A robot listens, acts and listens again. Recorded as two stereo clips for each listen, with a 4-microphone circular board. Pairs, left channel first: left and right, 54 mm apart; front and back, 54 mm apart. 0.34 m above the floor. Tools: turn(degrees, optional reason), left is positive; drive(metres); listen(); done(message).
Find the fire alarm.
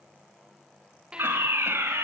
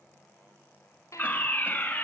turn(degrees=-55, reason="The fire alarm: 55° right.")
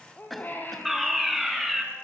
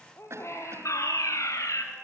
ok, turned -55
done("Facing the fire alarm.")